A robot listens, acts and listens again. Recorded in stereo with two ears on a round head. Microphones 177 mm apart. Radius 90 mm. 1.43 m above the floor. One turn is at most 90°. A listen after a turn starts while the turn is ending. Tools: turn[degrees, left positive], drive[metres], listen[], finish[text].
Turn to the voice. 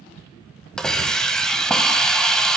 Action: listen[]
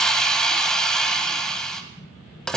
Action: listen[]
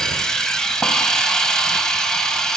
Action: finish[I can't make out anyone speaking, only a hiss.]